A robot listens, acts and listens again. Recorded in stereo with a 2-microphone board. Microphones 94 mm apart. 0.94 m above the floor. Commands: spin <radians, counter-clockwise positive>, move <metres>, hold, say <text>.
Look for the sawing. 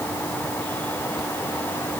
hold
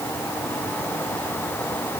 hold
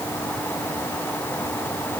say I can't make out sawing to turn to.